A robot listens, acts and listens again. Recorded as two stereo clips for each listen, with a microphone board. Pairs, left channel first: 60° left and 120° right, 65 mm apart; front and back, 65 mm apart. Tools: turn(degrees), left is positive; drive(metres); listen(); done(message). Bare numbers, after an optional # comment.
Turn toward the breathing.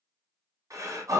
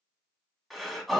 # The breathing: 90° right.
turn(-90)
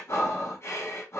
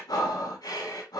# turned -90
# The breathing is now 15° left.
turn(15)
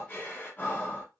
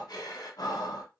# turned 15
done("Found it: breathing, straight ahead, 1 to 2 m away.")